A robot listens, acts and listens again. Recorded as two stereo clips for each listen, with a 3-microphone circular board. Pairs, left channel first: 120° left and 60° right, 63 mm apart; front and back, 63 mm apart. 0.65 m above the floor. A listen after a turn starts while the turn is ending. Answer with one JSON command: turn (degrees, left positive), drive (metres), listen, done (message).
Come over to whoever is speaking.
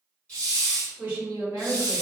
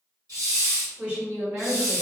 {"turn": -115}
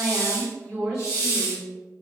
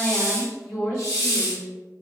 {"turn": 25}
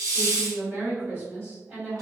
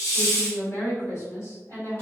{"drive": 1.0}
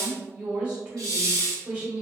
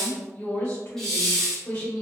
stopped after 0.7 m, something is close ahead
{"done": "I am next to the woman speaking."}